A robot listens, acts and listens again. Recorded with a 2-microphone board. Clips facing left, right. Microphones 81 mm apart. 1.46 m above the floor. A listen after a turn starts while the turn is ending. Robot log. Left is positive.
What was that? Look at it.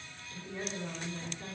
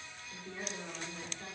cmd yaw -30
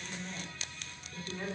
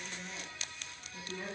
note: So it is at 15° left.
cmd yaw +15
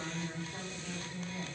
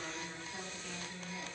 end: Facing the woman speaking.